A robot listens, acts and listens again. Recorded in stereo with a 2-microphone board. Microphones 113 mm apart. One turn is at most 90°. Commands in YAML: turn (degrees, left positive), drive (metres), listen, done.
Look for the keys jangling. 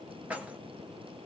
turn: -30
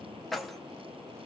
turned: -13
done: "Facing the keys jangling, 1 to 2 m away."